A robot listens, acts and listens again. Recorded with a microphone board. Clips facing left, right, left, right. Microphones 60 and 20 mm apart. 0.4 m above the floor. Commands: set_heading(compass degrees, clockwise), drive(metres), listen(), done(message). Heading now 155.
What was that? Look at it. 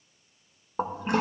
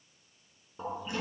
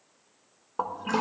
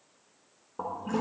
set_heading(100)
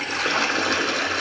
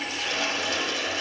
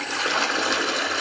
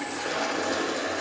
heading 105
set_heading(30)
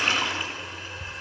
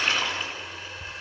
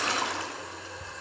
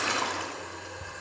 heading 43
set_heading(33)
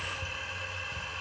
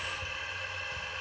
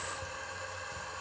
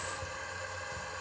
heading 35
done("Found it: a toilet flushing, straight ahead, under 1 m away.")